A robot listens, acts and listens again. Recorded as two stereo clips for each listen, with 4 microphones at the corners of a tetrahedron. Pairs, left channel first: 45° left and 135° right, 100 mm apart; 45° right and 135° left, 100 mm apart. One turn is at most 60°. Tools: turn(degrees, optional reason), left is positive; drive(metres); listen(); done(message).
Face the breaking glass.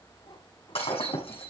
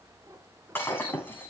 turn(degrees=25, reason="The breaking glass: 25° left.")
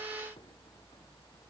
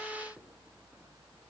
done("I heard breaking glass from this way, but can't make it out now.")